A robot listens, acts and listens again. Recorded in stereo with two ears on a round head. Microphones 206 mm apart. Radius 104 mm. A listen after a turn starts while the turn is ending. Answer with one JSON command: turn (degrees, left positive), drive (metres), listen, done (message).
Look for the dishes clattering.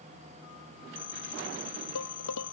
{"turn": 90}
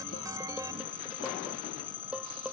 {"done": "Found it: dishes clattering, straight ahead."}